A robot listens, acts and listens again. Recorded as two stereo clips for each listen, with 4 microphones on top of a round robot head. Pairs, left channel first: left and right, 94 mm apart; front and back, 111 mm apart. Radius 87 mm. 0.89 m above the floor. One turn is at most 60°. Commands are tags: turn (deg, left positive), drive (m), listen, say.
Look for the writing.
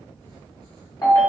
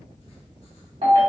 <listen/>
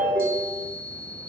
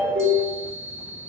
<listen/>
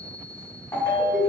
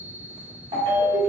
<say>I can't make out writing, only a ringtone and a chime.</say>